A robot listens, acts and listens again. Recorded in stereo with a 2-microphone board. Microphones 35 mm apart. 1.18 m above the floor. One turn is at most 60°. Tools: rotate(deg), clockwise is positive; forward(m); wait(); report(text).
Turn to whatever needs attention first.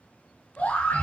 rotate(-55)
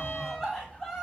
report("Found it: a scream, straight ahead.")